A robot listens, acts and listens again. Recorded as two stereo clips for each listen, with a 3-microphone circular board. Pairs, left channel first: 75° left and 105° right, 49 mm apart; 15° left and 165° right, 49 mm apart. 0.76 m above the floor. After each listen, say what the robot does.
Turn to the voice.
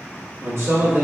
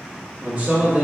Turn 105° right.
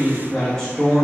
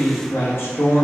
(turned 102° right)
Found it: a man speaking, straight ahead, under 1 m away.